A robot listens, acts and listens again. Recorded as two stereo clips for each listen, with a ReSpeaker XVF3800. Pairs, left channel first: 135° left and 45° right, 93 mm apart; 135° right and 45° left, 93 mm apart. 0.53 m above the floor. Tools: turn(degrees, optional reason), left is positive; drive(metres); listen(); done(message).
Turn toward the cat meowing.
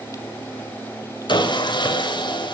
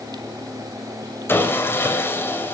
listen()
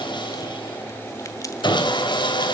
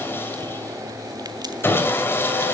listen()
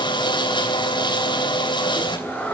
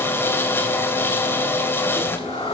turn(degrees=-150, reason="The cat meowing: 150° right.")
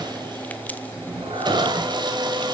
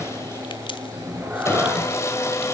turn(degrees=-30, reason="The cat meowing is now 30° right.")
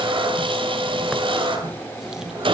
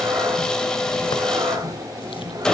done("Found it: a cat meowing, straight ahead, over 4 m away.")